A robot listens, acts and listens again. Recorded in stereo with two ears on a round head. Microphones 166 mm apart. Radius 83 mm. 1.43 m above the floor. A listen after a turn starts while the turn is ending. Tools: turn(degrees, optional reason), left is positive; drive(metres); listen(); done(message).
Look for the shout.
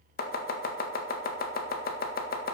listen()
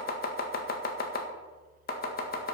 listen()
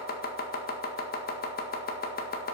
done("I can't make out a shout, only chopping.")